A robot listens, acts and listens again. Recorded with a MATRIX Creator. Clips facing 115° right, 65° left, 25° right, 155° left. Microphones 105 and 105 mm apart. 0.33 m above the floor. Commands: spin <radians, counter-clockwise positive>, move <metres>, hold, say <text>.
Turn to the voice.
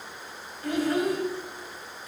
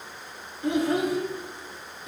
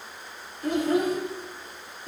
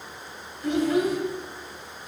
say Found it: a child speaking, straight ahead, under 1 m away.